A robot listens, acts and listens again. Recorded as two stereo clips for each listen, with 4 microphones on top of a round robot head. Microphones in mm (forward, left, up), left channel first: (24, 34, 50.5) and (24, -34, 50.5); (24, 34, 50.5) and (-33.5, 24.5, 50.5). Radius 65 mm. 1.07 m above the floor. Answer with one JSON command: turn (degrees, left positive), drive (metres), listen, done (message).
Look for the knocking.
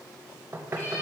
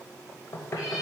{"turn": -35}
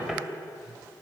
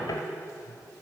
{"done": "Facing the knocking."}